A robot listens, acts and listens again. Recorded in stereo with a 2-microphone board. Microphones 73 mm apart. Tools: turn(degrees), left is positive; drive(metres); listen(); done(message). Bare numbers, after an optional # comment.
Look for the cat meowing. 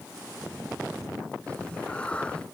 # The cat meowing: about 15° left or 165° left.
turn(15)
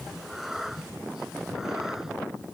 turn(-30)
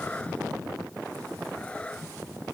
# So it is at 15° left.
turn(15)
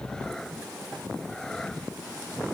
# The cat meowing is now 10° left.
turn(10)
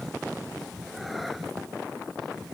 done("Facing the cat meowing.")